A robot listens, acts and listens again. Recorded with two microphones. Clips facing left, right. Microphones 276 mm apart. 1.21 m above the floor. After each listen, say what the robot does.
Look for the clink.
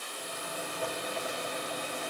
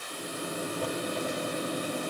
Keep listening.
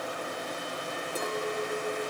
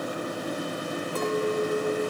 Turn 30° left.
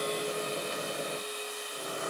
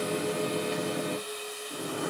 Keep listening.
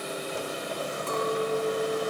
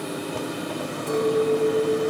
Turn 15° right.
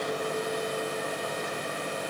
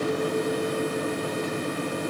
Keep listening.
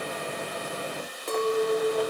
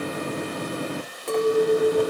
Found it: a clink, straight ahead, 2 to 4 m away.